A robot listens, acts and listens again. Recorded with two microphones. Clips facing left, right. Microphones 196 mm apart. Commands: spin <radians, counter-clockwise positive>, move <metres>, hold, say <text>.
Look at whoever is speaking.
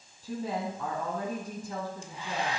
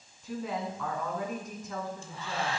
spin 0.52
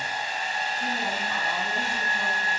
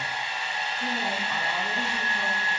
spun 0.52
hold
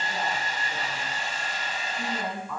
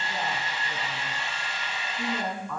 say Found it: a woman speaking, straight ahead.